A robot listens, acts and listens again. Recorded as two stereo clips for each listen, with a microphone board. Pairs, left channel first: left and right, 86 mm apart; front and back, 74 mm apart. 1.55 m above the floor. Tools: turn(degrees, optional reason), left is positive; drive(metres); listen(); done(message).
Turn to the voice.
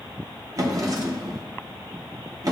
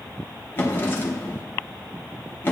listen()
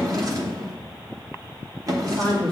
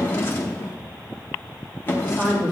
turn(degrees=-110, reason="The man speaking: 110° right.")
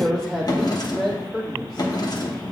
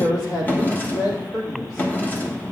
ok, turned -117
done("Facing the man speaking, 2 to 4 m away.")